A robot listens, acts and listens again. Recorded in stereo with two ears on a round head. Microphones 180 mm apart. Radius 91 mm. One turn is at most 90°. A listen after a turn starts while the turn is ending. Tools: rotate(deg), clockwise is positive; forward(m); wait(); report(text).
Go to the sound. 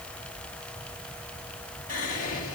rotate(-40)
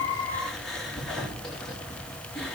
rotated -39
forward(1.0)
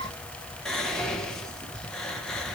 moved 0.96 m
forward(1.0)
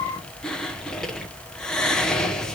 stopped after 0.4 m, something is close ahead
report("Arrived at the whispering, straight ahead.")